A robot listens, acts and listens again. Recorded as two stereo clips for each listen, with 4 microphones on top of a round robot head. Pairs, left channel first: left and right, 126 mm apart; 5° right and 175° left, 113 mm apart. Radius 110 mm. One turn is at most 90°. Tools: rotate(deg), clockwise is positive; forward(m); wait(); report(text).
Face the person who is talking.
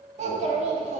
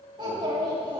rotate(90)
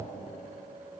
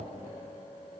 rotate(50)
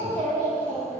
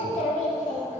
rotate(-10)
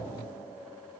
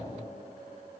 wait()
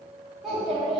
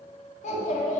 report("Found it: a child speaking, straight ahead.")